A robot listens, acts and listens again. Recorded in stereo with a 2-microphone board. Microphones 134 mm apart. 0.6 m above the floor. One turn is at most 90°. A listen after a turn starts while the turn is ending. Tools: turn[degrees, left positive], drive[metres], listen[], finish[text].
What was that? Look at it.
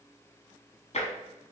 Thought: The tapping: about 55° left or 125° left.
Action: turn[55]
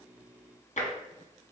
Thought: So it is at 65° left.
Action: turn[65]
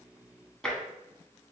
Action: finish[Found it: tapping, straight ahead.]